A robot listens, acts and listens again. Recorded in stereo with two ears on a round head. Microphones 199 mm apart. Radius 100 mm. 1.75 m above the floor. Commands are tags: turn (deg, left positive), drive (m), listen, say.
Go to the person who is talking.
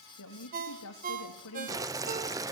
<turn deg="90"/>
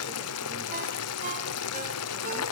<listen/>
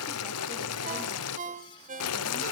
<listen/>
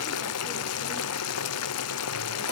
<say>I heard a woman speaking from this way, but can't make it out now. I did not reach it.</say>